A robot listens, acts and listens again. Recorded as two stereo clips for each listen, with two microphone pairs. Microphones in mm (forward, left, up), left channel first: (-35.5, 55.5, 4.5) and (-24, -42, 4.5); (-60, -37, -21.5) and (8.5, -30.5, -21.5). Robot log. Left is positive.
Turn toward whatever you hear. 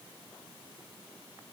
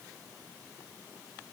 cmd idle
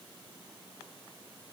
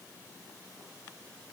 cmd idle
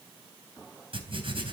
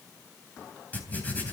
note: The writing: 110° right.
cmd yaw -110
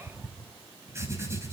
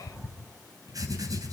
note: The writing is now 20° right.
cmd yaw -20
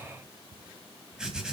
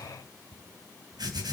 end: Facing the writing, 2 to 4 m away.